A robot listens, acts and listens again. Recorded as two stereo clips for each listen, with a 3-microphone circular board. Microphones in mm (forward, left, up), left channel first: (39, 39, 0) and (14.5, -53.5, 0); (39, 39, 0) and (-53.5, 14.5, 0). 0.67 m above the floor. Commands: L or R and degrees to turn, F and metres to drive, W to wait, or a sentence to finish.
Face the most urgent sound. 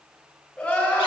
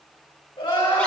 Found it: crying, straight ahead, 2 to 4 m away.